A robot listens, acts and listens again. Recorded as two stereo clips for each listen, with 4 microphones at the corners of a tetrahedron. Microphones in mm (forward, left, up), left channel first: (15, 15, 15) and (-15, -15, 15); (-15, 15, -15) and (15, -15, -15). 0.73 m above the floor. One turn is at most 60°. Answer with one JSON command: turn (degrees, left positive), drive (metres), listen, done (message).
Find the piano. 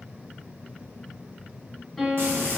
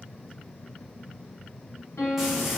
{"turn": 60}
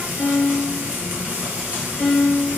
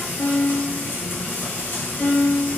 {"turn": 60}
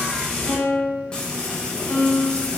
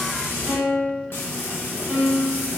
{"turn": 15}
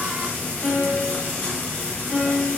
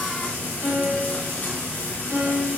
{"done": "Facing the piano, 1 to 2 m away."}